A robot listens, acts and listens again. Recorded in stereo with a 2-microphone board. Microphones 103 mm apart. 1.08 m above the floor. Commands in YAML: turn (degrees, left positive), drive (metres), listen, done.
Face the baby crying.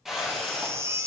turn: -25
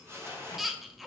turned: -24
done: "Found it: a baby crying, straight ahead, under 1 m away."